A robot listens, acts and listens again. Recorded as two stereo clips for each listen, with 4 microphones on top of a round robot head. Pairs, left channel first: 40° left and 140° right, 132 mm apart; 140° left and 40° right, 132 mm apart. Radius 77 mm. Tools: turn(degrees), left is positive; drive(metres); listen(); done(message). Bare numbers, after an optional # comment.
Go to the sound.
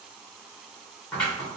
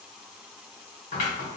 # The scissors: 120° left.
turn(120)
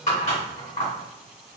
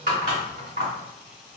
drive(1.0)
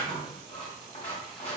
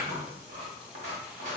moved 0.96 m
drive(1.0)
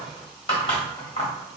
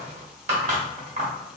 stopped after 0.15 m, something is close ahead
done("Arrived at the scissors, straight ahead.")